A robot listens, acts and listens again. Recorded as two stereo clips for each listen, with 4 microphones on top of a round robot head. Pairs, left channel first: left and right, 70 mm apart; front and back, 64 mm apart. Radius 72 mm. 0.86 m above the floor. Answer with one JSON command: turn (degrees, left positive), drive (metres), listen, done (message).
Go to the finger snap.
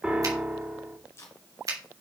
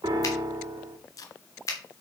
{"turn": -45}
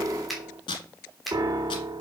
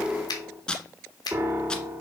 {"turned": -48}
{"drive": 1.0}
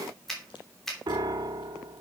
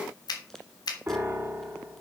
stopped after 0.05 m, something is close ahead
{"done": "Something is in my way. I am facing the finger snap but have not reached it."}